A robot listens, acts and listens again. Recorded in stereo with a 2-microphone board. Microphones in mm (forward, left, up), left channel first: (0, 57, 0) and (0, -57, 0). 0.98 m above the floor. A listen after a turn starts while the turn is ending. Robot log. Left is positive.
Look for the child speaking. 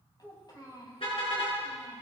note: The child speaking: about 40° left or 140° left.
cmd yaw +40
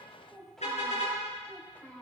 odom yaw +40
note: So it is at 10° left.
cmd yaw +10
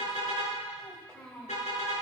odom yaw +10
note: The child speaking is now 10° left.
cmd yaw +10
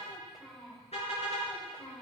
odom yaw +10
note: The child speaking is now 10° left.
cmd yaw +10
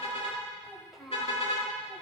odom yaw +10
end: Found it: a child speaking, straight ahead, over 4 m away.